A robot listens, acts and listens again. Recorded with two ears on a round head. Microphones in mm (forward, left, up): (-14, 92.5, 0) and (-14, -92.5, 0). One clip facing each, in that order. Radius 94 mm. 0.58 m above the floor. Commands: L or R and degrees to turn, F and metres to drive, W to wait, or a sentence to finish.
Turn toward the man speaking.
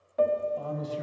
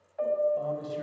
R30
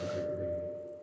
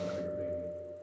R145
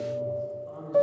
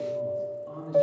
R50
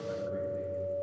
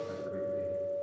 R20
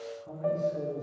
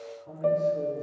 Found it: a man speaking, straight ahead, over 4 m away.